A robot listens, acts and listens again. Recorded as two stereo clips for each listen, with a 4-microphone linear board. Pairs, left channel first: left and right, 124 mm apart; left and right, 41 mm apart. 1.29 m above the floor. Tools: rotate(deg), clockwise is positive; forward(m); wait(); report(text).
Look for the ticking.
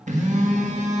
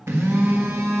wait()
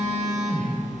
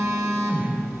wait()
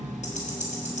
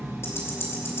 rotate(-65)
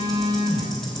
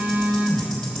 wait()
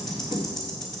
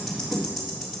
report("Found it: ticking, straight ahead, 2 to 4 m away.")